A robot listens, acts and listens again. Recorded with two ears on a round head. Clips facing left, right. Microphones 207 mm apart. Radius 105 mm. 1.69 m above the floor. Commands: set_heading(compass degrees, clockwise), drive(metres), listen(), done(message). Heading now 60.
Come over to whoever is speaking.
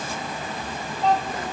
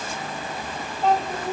set_heading(90)
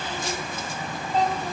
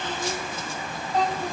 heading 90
set_heading(60)
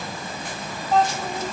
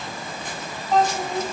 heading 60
drive(1.0)
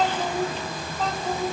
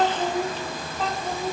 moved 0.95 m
drive(1.0)
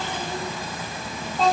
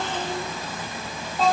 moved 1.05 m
drive(1.0)
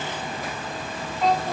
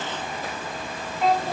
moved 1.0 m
drive(1.0)
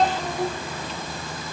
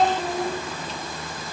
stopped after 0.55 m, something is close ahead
done("I am next to the child speaking.")